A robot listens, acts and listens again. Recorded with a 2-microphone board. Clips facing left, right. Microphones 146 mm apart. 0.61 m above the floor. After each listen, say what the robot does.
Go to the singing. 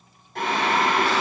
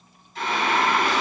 Turn 65° left.
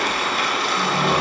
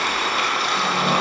Drive 1.0 m forward.
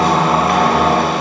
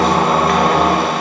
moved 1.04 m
Turn 15° right.
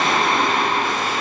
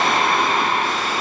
Drive 1.0 m forward.
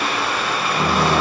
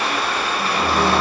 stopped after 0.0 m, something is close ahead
I am next to the singing.